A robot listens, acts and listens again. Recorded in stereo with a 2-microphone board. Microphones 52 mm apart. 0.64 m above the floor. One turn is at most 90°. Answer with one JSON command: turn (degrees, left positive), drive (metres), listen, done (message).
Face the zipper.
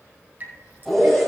{"turn": 30}
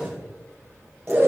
{"turn": -25}
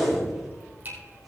{"done": "Facing the zipper."}